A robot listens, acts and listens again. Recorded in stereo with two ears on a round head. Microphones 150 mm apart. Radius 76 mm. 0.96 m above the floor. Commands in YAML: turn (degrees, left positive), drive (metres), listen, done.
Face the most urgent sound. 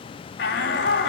turn: 90
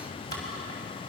listen: true
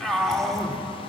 done: "Facing the shout, 2 to 4 m away."